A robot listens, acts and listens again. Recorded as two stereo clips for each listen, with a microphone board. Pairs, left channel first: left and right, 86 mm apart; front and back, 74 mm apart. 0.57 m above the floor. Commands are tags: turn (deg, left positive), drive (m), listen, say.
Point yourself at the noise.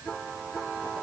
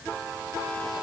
<listen/>
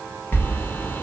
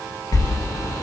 <turn deg="30"/>
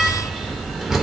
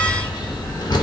<say>Facing the sliding door, under 1 m away.</say>